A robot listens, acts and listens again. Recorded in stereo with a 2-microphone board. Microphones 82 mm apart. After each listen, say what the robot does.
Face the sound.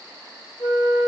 Turn 45° left.
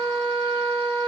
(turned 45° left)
Turn 10° left.
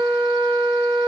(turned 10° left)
Found it: a flute, straight ahead.